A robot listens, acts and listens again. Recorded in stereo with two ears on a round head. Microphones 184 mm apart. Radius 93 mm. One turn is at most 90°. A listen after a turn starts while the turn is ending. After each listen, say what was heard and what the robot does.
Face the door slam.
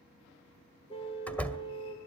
Turn 30° left.
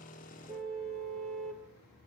Keep listening.
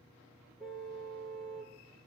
I heard a door slam, but can't make it out now. It was about 25° right or 145° left.